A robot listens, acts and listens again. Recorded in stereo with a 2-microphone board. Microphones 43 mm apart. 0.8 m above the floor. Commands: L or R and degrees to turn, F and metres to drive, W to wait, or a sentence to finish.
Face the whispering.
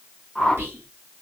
R65
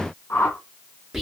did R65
R10
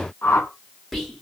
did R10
Facing the whispering, 1 to 2 m away.